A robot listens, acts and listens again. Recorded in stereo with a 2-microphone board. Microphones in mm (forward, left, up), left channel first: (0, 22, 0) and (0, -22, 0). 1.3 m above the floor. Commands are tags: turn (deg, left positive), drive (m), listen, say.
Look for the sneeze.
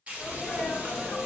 <turn deg="30"/>
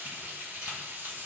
<listen/>
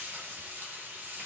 <say>I heard a sneeze, but can't make it out now. It was about 15° right or 135° left.</say>